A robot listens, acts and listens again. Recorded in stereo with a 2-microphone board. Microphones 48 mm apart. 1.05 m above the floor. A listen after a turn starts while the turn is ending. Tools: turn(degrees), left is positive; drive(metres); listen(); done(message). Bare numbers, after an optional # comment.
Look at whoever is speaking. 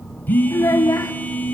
turn(90)
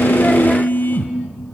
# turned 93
listen()
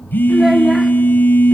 listen()
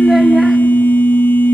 done("I heard a child speaking from this way, but can't make it out now.")